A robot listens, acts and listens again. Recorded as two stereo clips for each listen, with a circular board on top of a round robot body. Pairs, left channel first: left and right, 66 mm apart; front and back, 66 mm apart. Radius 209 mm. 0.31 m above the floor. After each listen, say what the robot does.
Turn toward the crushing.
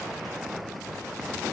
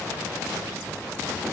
Keep listening.
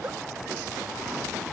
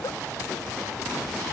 Keep listening.
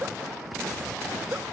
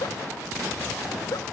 I can't make out crushing, only a giggle.